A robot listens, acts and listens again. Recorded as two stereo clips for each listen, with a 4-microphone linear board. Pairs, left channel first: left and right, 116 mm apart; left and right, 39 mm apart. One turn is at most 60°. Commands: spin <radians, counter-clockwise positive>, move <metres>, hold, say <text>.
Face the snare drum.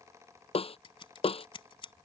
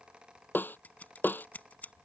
spin 0.96
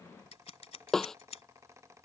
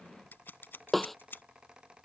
say Facing the snare drum.